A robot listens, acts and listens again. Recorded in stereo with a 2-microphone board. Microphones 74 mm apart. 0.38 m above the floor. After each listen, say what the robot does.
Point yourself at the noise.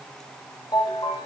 Turn 65° left.
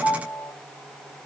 Found it: a ringtone, straight ahead, over 4 m away.